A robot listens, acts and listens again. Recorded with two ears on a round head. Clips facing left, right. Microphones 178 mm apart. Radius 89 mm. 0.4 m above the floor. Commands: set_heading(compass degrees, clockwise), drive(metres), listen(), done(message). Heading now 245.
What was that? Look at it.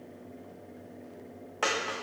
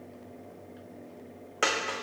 set_heading(270)
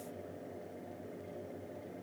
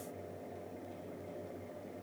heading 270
listen()
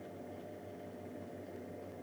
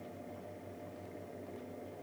done("I heard a dropped coin, but can't make it out now. It was about straight ahead or 130° right.")